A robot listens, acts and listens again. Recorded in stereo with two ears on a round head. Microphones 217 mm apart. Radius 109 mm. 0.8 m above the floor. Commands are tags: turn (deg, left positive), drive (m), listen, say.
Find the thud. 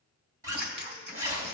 <listen/>
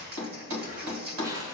<turn deg="-90"/>
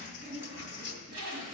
<say>Facing where the thud came from. I can't hear it now.</say>